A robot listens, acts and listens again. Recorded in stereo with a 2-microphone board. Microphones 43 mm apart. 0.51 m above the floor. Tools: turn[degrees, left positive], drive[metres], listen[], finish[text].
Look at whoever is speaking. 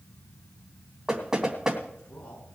Thought: The man speaking: about 65° left or 115° left.
Action: turn[65]
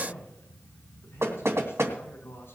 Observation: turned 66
Thought: So it is at 50° left.
Action: turn[50]
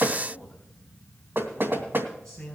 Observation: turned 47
Action: finish[Found it: a man speaking, straight ahead.]